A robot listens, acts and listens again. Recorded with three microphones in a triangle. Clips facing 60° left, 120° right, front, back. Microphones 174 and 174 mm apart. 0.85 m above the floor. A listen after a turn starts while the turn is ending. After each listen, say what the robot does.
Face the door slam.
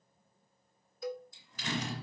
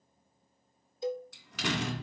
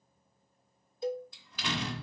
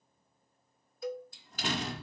Turn 130° right.
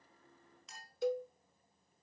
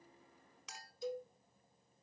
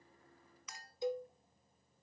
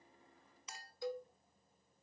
Facing where the door slam came from. I can't hear it now.